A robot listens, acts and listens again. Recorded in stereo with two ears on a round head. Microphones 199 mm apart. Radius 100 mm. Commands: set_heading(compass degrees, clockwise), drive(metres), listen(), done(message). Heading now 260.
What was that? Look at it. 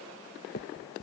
set_heading(215)
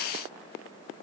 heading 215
listen()
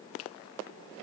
listen()
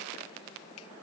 done("I heard a finger snap, but can't make it out now. It was about straight ahead or 90° left.")